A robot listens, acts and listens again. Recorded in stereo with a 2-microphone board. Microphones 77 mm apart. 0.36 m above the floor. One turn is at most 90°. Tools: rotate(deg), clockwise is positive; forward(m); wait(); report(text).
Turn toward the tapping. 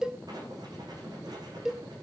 wait()
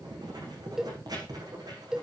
wait()
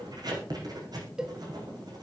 report("I can't make out tapping to turn to.")